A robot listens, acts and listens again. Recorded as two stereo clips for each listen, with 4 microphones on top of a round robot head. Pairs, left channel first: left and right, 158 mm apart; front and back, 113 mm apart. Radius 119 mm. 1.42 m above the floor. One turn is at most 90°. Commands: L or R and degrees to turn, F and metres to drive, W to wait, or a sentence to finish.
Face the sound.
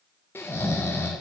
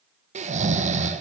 L90
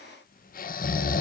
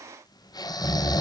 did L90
L60
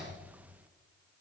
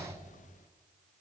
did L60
W
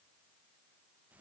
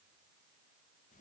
W
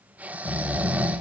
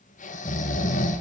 R10
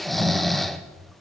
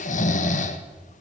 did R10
Facing the snoring, 1 to 2 m away.